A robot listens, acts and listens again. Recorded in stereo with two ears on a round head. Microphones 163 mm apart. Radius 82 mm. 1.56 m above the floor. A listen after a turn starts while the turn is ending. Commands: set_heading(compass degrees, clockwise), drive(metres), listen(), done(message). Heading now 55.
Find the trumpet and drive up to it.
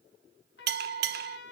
set_heading(350)
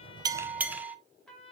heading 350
drive(1.0)
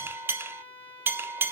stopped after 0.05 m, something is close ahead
set_heading(340)
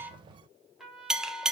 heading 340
done("Something is in my way. I am facing the trumpet but have not reached it.")